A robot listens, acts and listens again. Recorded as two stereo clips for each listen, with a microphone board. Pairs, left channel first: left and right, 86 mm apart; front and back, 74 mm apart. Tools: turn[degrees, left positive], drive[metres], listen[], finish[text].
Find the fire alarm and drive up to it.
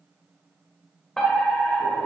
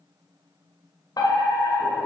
Thought: The fire alarm: 10° left.
Action: turn[10]
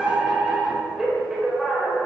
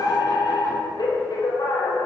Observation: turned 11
Action: drive[1.0]
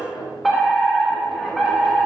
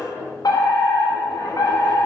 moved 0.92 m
Action: drive[1.0]
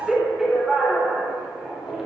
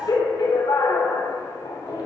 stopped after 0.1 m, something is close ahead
Action: finish[Blocked. The fire alarm is further on, straight ahead.]